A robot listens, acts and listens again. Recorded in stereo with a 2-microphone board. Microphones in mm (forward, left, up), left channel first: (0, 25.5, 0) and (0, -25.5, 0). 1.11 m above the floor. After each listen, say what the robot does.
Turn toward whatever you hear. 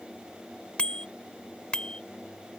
Turn 20° left.
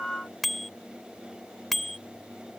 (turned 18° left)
Found it: a bicycle bell, straight ahead.